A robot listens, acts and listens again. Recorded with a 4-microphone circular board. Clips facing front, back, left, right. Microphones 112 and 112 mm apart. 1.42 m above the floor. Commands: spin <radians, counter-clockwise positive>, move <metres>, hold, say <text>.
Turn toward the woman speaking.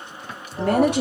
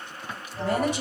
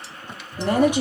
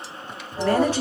spin 0.26
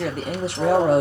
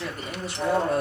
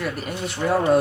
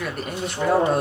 say Facing the woman speaking.